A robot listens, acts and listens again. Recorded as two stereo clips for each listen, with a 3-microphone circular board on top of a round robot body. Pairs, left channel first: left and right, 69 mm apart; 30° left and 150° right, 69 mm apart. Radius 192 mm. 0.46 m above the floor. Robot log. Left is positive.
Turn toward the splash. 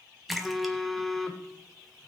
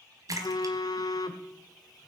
note: The splash: straight behind.
cmd yaw +180
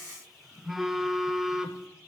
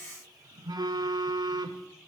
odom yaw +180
end: I heard a splash from this way, but can't make it out now.